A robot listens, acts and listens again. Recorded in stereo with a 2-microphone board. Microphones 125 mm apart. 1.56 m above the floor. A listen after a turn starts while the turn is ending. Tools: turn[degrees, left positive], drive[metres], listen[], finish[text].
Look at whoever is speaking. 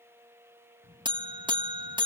Thought: The child speaking: about 40° left or 140° left.
Action: turn[40]
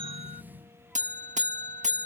Action: finish[Facing the child speaking.]